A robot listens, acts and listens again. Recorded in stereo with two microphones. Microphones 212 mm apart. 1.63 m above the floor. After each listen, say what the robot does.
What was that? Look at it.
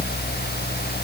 Keep listening.
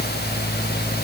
Keep listening.
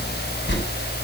Turn 60° left.
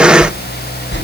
Turn 60° left.
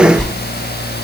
Facing the whoosh.